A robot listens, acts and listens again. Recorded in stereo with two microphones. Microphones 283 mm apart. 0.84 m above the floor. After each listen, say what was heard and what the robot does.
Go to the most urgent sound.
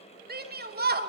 The shout: about 30° right or 150° right. Turn 30° right.
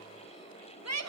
So it is at 115° right. Turn 115° right.
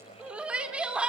Drive 1.0 m forward.
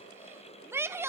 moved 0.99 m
The shout is now 10° right. Turn 10° right.
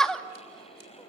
Drive 1.0 m forward.
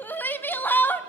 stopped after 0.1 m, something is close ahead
I am next to the shout.